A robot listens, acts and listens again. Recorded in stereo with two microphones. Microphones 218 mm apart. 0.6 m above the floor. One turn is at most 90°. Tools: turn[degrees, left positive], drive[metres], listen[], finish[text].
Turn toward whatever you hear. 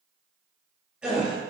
Action: turn[-30]
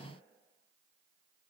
Action: listen[]
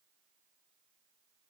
Action: finish[I heard a gasp, but can't make it out now. It was about 25° left or 145° right.]